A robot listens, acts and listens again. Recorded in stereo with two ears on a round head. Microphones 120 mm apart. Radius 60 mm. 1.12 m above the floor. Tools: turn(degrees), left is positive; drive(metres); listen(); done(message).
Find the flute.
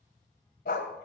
listen()
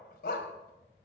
listen()
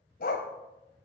done("I can't make out a flute, only a dog barking.")